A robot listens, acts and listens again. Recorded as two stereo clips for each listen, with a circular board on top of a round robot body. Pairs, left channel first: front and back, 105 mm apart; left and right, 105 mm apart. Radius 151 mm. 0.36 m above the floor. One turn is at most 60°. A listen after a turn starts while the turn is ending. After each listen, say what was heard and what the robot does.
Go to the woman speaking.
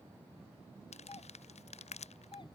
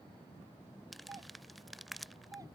Keep listening.
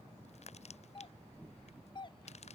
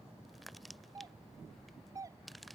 Keep listening.
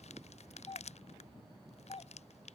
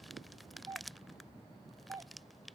I can't make out a woman speaking to turn to.